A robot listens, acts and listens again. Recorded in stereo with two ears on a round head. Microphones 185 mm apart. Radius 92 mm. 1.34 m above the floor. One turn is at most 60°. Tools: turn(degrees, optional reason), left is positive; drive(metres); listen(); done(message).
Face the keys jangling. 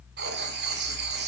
listen()
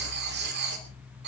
listen()
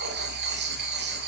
done("I can't make out keys jangling to turn to.")